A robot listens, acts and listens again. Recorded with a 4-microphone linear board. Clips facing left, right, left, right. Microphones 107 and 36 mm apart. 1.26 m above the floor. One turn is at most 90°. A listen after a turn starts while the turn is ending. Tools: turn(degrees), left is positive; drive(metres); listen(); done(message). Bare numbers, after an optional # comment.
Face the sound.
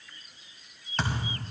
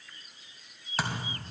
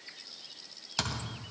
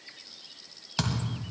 turn(-30)
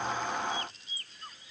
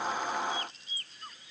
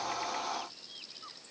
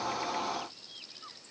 listen()
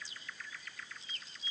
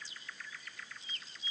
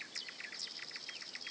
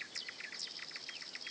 done("I heard a thud, but can't make it out now. It was about 25° left or 145° right.")